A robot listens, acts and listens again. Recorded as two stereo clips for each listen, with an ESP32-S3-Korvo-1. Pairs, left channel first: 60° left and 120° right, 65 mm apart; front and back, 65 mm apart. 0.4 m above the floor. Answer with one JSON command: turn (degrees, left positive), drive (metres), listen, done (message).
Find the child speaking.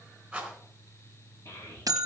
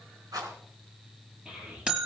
{"turn": 100}
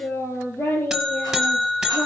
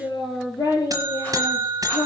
{"done": "Found it: a child speaking, straight ahead, over 4 m away."}